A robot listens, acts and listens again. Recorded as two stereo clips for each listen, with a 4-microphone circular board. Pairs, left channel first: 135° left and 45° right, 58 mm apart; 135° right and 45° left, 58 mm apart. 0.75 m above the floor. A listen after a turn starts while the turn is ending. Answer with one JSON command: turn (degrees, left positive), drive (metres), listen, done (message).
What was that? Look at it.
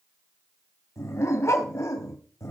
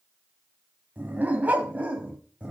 {"turn": 115}
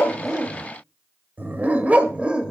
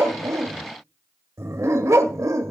{"turn": 30}
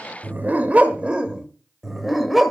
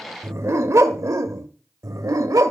{"turn": 40}
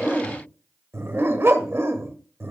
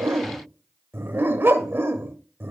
{"done": "Facing the dog barking."}